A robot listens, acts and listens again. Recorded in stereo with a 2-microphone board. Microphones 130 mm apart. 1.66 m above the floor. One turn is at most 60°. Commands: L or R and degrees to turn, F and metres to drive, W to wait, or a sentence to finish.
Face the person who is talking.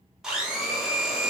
W
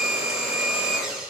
W
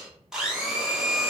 I can't make out anyone speaking to turn to.